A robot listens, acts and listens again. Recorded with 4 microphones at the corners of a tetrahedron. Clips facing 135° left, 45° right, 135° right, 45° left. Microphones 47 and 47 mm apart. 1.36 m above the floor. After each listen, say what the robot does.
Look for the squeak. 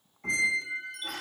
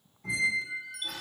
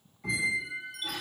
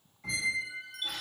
Turn 140° left.
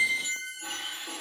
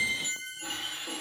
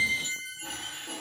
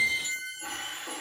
Turn 40° left.
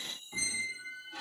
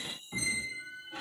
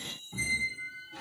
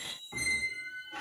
Turn 15° left.
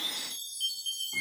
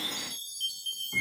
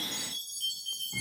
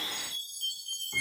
Found it: a squeak, straight ahead.